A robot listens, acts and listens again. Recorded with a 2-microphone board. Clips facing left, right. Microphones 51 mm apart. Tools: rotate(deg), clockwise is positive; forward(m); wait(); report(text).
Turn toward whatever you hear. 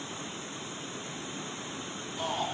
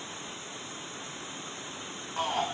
rotate(90)
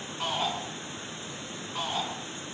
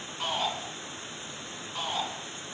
report("Facing the shout.")